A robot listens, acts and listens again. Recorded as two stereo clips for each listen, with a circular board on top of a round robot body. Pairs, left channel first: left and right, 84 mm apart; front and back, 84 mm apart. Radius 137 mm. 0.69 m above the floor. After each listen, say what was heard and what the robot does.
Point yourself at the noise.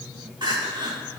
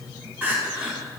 The crying: 110° right. Turn 110° right.
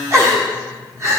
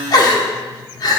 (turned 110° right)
The crying is now 35° right. Turn 35° right.
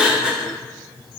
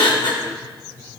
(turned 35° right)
The crying is now 10° right. Turn 10° right.
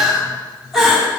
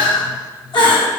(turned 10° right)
Found it: crying, straight ahead, 1 to 2 m away.